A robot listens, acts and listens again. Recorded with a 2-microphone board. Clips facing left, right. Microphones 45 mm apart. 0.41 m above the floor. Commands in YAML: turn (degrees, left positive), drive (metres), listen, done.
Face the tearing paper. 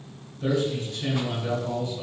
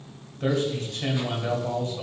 listen: true
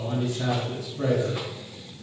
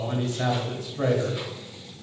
listen: true
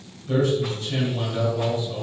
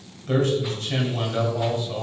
done: "I can't make out tearing paper, only a man speaking."